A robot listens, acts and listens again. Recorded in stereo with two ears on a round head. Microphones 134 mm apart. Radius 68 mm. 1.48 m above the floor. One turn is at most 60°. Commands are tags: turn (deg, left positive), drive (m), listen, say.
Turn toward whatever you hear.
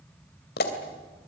<turn deg="60"/>
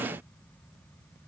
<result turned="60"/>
<listen/>
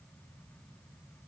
<say>I heard a pop, but can't make it out now. It was about 15° left or 45° left.</say>